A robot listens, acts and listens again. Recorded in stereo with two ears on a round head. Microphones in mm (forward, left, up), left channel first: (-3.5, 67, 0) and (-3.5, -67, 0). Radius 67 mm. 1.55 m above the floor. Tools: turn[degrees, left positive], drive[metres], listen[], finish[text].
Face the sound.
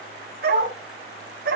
Thought: The dog barking: about 65° right or 115° right.
Action: turn[-65]
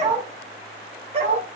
Thought: So it is at 40° right.
Action: turn[-40]
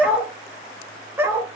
Thought: The dog barking is now 15° right.
Action: turn[-15]
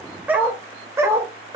Thought: The dog barking is now 20° right.
Action: turn[-20]
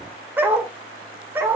Thought: The dog barking is now 15° right.
Action: turn[-15]
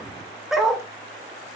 Action: finish[Found it: a dog barking, straight ahead, 1 to 2 m away.]